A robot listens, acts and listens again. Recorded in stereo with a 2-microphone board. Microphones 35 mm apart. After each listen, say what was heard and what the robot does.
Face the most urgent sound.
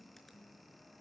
Keep listening.
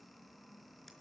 Keep listening.
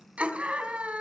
The scream: about 45° right or 135° right. Turn 45° right.
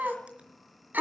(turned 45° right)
So it is at 90° right. Turn 90° right.
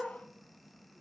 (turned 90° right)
Keep listening.
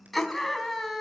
Facing the scream, 2 to 4 m away.